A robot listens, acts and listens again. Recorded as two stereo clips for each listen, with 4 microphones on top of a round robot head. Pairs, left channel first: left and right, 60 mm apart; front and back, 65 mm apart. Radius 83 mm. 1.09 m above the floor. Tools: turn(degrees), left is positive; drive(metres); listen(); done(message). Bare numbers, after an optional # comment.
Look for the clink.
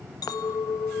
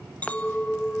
# The clink: 70° left.
turn(70)
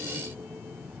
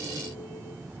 listen()
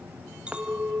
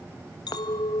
# The clink is now 15° right.
turn(-15)
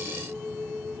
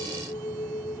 done("Found it: a clink, straight ahead, 1 to 2 m away.")